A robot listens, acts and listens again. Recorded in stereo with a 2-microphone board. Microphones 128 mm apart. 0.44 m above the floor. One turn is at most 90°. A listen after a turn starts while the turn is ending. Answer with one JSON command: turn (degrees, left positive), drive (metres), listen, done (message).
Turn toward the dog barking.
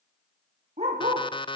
{"turn": -55}
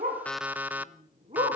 {"turn": -55}
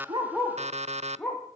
{"turn": 10}
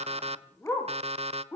{"turn": 20}
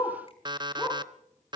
{"done": "Found it: a dog barking, straight ahead."}